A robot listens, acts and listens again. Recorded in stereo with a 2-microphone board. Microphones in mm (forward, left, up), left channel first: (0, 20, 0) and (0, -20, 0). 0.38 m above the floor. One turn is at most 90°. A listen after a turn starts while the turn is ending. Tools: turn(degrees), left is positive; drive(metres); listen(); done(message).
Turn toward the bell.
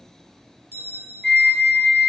turn(degrees=-90)
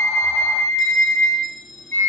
done("Facing the bell.")